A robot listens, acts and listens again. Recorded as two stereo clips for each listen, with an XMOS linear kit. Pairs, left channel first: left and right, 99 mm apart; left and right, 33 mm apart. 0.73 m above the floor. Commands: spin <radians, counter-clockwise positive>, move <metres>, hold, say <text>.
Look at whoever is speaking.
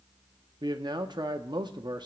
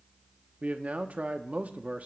spin -0.79
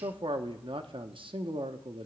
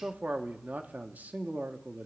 spin -1.40
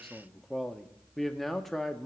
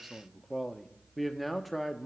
say Facing the man speaking, under 1 m away.